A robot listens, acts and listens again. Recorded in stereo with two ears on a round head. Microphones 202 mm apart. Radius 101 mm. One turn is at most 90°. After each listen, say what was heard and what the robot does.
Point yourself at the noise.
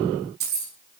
The keys jangling: about 45° right or 135° right. Turn 45° right.
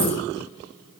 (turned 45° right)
Keep listening.
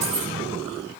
So it is at 85° right. Turn 85° right.
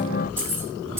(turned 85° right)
The keys jangling is now 10° right. Turn 10° right.
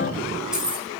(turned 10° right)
Found it: keys jangling, straight ahead, over 4 m away.